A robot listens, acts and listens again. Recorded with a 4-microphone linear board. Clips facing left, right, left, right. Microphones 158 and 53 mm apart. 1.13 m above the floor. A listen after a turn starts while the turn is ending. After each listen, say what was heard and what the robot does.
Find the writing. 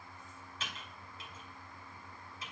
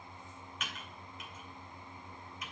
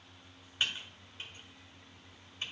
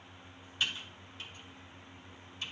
Keep listening.
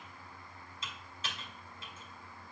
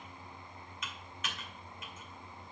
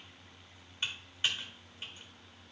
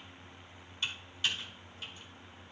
Keep listening.
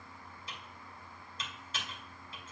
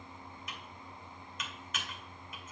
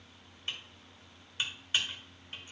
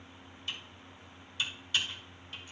I can't make out writing to turn to.